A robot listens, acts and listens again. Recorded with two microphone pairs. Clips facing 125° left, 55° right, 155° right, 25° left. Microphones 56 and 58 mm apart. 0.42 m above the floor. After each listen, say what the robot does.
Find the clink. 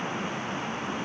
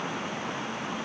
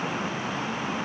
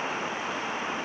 Keep listening.
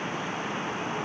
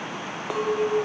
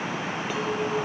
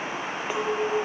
Turn 45° right.
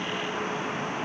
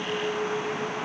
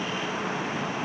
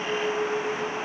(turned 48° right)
Found it: a clink, straight ahead.